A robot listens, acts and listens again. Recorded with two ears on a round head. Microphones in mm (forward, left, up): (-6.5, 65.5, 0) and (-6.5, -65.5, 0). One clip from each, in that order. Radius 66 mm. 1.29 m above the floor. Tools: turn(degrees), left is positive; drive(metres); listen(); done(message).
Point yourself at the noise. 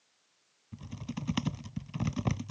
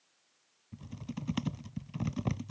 turn(degrees=25)
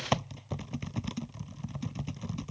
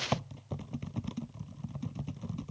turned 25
turn(degrees=130)
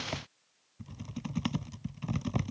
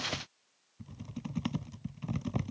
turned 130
turn(degrees=20)
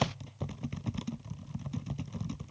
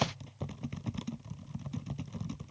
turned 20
done("Found it: typing on a keyboard, straight ahead.")